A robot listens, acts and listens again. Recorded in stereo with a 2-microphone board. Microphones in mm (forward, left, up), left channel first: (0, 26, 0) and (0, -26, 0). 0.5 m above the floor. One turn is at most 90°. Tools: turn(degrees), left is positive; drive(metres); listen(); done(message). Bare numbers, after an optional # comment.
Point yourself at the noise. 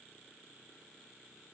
listen()
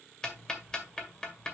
# The ticking: about 15° left or 165° left.
turn(15)
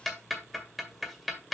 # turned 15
done("Found it: ticking, straight ahead, 1 to 2 m away.")